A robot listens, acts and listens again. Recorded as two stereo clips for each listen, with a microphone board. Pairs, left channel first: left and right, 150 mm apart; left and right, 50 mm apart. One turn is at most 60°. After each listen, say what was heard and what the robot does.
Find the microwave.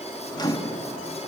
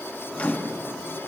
The microwave: about 30° left or 150° left. Turn 30° left.
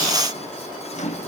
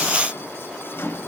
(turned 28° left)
So it is at 120° left. Turn 60° left.
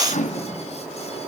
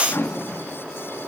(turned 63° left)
The microwave is now 60° left. Turn 60° left.
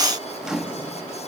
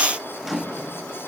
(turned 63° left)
Facing the microwave, 1 to 2 m away.